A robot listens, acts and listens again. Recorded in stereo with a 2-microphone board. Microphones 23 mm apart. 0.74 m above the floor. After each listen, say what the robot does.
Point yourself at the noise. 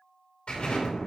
Turn 50° left.
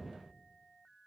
Keep listening.
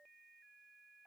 I heard an explosion, but can't make it out now. It was about straight ahead or 80° left.